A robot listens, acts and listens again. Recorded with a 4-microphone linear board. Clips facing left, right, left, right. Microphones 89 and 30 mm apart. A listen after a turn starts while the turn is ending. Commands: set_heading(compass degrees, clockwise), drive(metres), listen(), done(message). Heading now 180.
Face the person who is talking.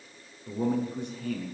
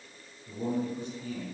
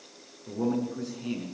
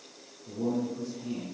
set_heading(120)
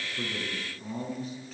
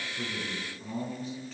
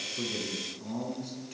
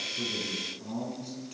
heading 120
done("Facing the man speaking.")